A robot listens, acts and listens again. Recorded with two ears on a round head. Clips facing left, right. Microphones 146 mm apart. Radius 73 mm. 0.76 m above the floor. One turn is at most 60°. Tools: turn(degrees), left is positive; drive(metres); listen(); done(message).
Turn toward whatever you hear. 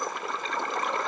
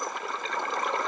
listen()
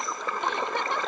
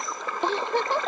turn(degrees=-30)
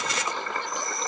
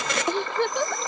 turn(degrees=-60)
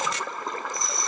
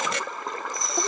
turn(degrees=-60)
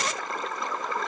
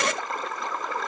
listen()
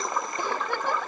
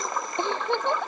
turn(degrees=-20)
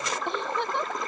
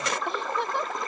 done("Found it: a giggle, straight ahead.")